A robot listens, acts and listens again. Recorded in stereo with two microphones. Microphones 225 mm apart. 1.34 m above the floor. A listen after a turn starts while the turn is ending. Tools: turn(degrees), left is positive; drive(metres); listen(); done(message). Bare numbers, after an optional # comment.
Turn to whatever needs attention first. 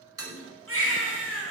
# The baby crying: about 70° right or 110° right.
turn(-70)
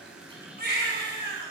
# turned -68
# So it is at 40° right.
turn(-40)
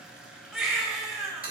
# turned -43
done("Found it: a baby crying, straight ahead, over 4 m away.")